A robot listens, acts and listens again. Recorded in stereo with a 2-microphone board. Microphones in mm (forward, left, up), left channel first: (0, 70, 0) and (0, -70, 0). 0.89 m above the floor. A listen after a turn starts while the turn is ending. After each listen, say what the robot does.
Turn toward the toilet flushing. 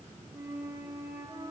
Keep listening.
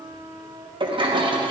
Turn 35° right.
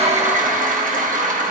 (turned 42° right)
Turn 100° right.
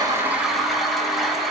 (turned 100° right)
Facing the toilet flushing, under 1 m away.